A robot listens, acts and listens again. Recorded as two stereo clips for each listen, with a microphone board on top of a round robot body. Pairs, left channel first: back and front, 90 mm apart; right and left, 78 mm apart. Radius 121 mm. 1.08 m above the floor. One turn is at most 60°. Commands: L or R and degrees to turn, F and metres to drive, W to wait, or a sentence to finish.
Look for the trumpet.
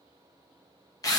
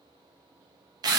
W
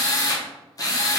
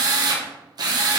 W
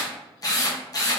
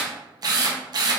I can't make out a trumpet to turn to.